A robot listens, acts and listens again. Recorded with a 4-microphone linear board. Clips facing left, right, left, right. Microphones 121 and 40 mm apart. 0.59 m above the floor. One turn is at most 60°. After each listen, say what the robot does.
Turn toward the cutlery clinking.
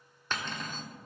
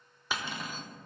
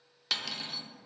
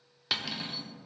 Turn 30° right.
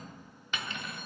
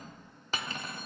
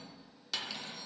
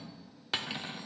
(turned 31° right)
Turn 60° right.
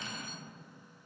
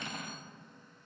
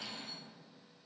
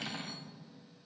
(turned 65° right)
Turn 60° right.
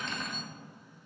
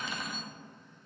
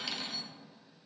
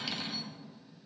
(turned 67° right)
Found it: cutlery clinking, straight ahead, under 1 m away.